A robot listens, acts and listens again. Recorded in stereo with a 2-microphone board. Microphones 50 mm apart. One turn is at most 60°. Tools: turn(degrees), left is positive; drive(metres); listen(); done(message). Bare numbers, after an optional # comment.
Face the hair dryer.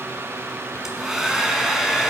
turn(-30)
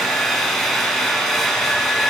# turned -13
done("Facing the hair dryer, 1 to 2 m away.")